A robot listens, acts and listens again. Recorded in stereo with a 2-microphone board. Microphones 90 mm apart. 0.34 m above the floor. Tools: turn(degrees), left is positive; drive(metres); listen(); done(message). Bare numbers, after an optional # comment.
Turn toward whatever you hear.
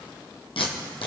turn(90)
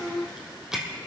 # So it is at 10° right.
turn(-10)
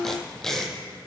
done("Found it: tape being pulled, straight ahead.")